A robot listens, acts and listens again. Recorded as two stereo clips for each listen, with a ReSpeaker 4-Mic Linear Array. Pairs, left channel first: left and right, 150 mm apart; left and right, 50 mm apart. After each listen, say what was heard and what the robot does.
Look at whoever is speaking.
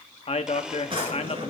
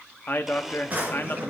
The man speaking: about 45° left or 135° left. Turn 45° left.
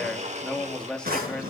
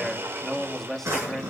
Facing the man speaking.